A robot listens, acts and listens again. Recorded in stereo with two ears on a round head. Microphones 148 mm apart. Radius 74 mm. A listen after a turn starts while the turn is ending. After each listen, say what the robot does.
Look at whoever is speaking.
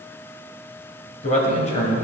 Turn 50° left.
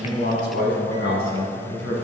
Turn 75° left.
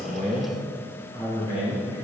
Turn 30° left.
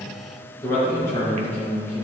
Turn 15° left.
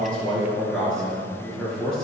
Facing the man speaking, over 4 m away.